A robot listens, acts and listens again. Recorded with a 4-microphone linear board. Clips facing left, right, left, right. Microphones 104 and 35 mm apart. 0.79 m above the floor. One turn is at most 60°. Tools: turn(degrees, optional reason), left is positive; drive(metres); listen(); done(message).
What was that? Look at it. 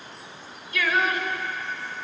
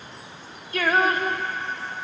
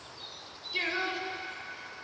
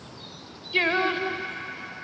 turn(degrees=-40, reason="The singing: about 40° right or 140° right.")
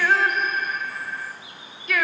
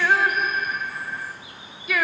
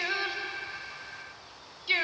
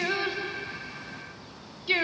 done("Facing the singing, 1 to 2 m away.")